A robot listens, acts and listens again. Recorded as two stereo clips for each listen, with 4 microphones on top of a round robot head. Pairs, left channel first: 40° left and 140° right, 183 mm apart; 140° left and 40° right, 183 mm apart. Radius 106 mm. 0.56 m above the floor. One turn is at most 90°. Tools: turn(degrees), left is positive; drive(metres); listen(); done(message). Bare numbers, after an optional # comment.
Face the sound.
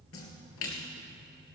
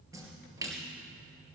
# The splash: 35° left.
turn(35)
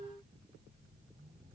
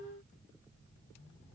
done("I heard a splash from this way, but can't make it out now.")